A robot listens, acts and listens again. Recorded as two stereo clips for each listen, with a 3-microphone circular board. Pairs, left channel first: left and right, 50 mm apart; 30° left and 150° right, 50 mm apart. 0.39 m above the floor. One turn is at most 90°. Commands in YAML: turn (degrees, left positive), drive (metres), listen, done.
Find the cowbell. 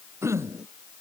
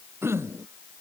listen: true
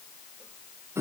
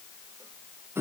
listen: true
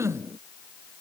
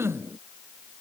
done: "I can't make out a cowbell to turn to."